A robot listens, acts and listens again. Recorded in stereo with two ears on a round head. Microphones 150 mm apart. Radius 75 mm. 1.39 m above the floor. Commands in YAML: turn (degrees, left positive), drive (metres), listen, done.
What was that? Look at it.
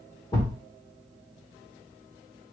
turn: 25
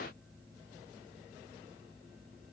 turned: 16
listen: true
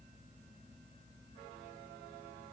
done: "I heard a thud, but can't make it out now. It was about 10° left or 140° left."